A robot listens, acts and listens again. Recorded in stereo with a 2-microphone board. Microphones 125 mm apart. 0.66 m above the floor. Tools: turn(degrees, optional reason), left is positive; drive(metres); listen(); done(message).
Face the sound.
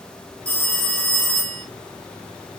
turn(degrees=30)
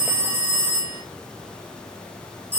turn(degrees=-15, reason="So it is at 15° right.")
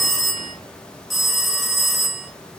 done("Found it: a phone ringing, straight ahead, under 1 m away.")